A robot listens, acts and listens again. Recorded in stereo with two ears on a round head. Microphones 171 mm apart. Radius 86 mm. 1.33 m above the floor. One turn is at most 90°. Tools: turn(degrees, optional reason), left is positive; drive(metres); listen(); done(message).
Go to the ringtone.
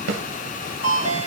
turn(degrees=70, reason="The ringtone: about 70° left or 110° left.")
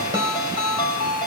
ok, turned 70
turn(degrees=25, reason="So it is at 25° left.")
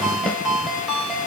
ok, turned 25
drive(metres=1.0)
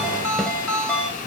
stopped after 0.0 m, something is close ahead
done("Blocked. The ringtone is further on, straight ahead.")